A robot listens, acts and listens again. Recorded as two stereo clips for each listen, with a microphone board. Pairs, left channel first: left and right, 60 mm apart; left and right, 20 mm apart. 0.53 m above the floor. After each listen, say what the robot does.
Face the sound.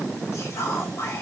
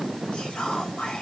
Turn 55° left.
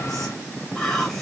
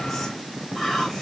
Turn 10° left.
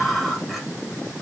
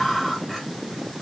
Facing the whispering.